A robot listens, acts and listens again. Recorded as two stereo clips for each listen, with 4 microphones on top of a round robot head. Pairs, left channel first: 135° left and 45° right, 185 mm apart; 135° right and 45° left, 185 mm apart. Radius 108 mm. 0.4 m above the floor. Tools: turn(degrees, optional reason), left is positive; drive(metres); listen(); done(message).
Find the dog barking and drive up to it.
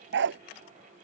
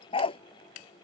turn(degrees=-75, reason="The dog barking: 75° right.")
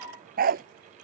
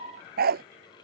drive(metres=1.0)
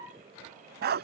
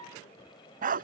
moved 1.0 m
drive(metres=1.0)
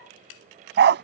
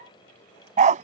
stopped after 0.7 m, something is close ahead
turn(degrees=-10, reason="The dog barking is now 10° right.")
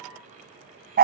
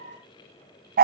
done("Arrived at the dog barking, straight ahead.")